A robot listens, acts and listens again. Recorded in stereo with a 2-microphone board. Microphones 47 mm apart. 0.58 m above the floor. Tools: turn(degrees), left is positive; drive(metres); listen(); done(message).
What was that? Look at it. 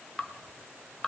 turn(degrees=30)
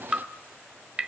turn(degrees=-30)
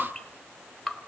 done("Facing the dripping, 1 to 2 m away.")